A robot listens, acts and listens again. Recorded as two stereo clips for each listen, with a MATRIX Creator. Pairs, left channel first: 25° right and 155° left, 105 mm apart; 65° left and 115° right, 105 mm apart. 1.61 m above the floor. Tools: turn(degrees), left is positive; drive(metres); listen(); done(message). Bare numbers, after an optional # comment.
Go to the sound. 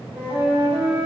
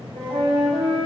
# The flute: 135° right.
turn(-135)
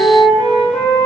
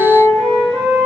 # The flute is now 15° right.
turn(-15)
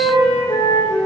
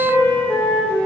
drive(1.0)
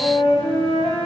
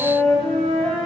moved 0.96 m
drive(1.0)
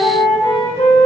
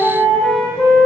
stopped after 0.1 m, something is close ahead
done("I am next to the flute.")